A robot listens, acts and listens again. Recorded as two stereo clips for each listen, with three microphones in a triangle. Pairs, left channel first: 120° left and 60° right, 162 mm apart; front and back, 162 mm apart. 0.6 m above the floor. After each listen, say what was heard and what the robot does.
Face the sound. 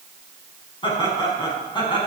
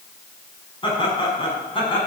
The laughter: 60° left. Turn 60° left.
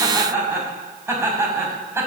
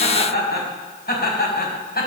The laughter is now 15° left. Turn 15° left.
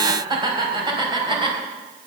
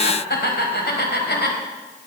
Facing the laughter.